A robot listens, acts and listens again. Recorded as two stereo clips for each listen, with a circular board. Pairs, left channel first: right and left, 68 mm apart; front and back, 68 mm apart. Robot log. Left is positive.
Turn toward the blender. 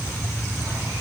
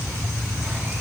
cmd idle
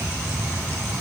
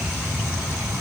cmd idle
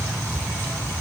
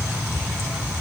end: I can't make out a blender.